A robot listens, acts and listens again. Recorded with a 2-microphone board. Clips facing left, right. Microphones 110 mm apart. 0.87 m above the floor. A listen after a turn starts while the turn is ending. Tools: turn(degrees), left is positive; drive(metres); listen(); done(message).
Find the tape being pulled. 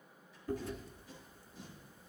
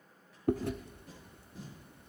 turn(degrees=-90)
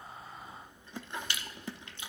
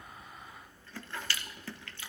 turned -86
listen()
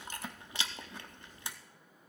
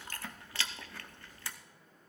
listen()
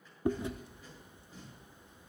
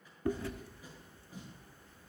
turn(degrees=-15)
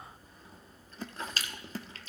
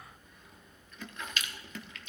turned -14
listen()
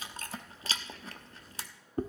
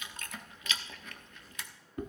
listen()
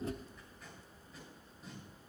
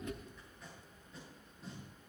done("Facing the tape being pulled.")